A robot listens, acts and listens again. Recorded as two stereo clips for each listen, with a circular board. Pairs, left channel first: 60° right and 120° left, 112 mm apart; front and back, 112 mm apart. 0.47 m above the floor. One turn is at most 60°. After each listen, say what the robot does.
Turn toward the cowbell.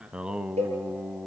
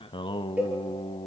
Turn 60° left.
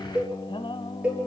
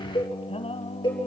Turn 45° left.
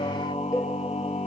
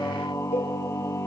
Facing the cowbell.